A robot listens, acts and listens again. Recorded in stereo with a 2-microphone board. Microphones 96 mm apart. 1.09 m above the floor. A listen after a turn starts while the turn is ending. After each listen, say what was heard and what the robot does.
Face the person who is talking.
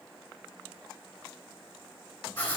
Keep listening.
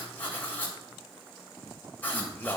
The man speaking: about 20° left or 160° left. Turn 20° left.
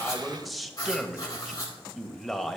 Found it: a man speaking, straight ahead.